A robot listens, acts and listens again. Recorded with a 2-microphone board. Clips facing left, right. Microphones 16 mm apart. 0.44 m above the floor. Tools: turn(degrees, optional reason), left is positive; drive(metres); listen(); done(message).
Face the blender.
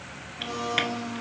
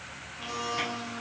turn(degrees=-30)
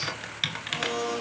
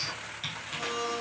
turn(degrees=25, reason="So it is at 25° left.")
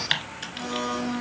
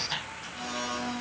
done("Found it: a blender, straight ahead.")